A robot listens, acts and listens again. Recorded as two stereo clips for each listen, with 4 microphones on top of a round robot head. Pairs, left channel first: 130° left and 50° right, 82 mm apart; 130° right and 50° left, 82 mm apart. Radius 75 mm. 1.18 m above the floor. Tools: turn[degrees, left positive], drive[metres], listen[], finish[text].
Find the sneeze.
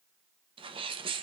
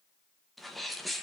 Thought: The sneeze: 40° right.
Action: turn[-40]
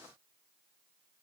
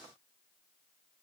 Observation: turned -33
Action: finish[Facing where the sneeze came from. I can't hear it now.]